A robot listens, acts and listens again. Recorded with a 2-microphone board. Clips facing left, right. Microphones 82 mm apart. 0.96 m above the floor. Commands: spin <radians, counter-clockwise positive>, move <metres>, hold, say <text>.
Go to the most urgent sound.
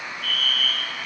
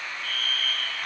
spin -0.61
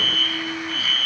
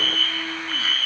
move 1.0
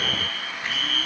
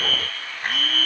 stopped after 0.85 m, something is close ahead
say Blocked. The fire alarm is further on, straight ahead.